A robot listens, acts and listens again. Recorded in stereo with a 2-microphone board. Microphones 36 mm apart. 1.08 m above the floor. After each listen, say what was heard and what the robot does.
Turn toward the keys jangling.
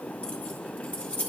The keys jangling: about 30° left or 150° left. Turn 30° left.
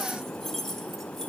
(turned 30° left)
Facing the keys jangling, 1 to 2 m away.